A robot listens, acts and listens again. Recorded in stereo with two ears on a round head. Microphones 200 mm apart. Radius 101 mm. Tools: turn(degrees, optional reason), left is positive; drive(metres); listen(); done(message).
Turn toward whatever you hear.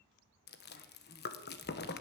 turn(degrees=50, reason="The chewing: about 50° left or 130° left.")
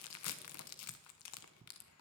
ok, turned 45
turn(degrees=85, reason="So it is at 85° left.")
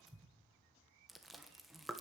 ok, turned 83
done("Facing the chewing.")